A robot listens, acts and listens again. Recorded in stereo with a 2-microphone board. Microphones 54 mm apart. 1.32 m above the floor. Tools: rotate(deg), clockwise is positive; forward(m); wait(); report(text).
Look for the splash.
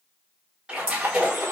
rotate(20)
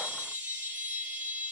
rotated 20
wait()
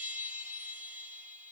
report("I heard a splash, but can't make it out now. It was about straight ahead or 140° right.")